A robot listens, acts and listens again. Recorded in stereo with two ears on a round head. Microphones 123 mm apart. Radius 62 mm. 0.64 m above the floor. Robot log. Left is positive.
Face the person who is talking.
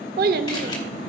note: The child speaking: about 70° right or 110° right.
cmd yaw -70
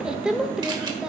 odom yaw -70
end: Facing the child speaking.